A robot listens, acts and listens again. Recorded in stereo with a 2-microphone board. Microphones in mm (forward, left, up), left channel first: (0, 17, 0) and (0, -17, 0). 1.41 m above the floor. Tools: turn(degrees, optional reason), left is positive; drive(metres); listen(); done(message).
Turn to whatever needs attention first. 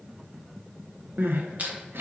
turn(degrees=-90)
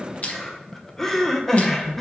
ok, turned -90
turn(degrees=10, reason="So it is at 10° left.")
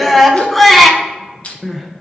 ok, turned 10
done("Found it: crying, straight ahead, under 1 m away.")